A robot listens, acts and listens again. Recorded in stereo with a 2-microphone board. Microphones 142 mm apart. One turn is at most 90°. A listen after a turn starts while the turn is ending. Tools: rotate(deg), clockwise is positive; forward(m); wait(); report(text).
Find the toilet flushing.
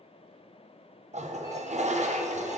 rotate(60)
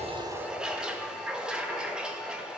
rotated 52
report("Facing the toilet flushing.")